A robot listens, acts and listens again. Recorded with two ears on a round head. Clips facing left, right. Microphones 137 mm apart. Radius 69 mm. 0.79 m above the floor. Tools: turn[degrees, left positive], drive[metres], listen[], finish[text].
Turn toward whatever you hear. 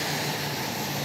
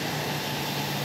Action: listen[]
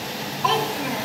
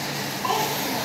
Action: turn[90]
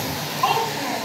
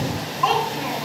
Action: finish[Found it: a child speaking, straight ahead, 2 to 4 m away.]